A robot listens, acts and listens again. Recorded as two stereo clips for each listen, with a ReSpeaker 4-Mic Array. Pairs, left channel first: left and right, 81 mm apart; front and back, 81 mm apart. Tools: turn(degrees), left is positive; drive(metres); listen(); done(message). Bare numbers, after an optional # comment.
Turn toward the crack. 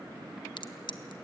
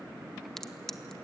# The crack: 85° left.
turn(85)
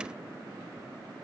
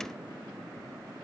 done("Facing where the crack came from. I can't hear it now.")